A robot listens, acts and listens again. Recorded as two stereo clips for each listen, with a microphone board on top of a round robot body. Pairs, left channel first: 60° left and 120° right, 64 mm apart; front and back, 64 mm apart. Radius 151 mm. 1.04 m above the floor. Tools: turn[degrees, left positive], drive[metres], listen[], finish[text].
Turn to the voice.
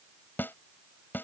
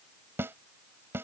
Action: listen[]
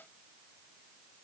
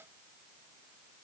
Action: listen[]
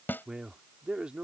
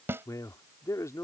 Thought: The man speaking: 45° right.
Action: turn[-45]
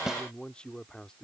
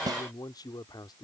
Thought: The man speaking is now 20° right.
Action: turn[-20]
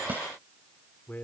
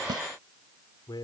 Thought: The man speaking is now 10° right.
Action: turn[-10]
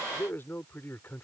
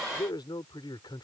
Action: finish[Facing the man speaking.]